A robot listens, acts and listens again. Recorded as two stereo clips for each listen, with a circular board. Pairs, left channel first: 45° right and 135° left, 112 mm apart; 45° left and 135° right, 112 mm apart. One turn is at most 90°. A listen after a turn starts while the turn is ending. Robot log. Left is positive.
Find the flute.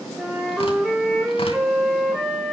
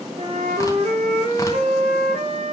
note: The flute: 140° right.
cmd yaw -90
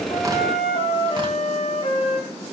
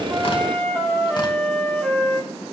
note: The flute is now 35° right.
cmd yaw -35
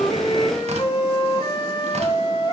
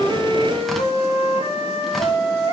note: The flute is now 10° left.
cmd yaw +10
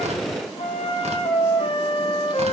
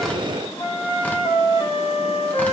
end: Found it: a flute, straight ahead.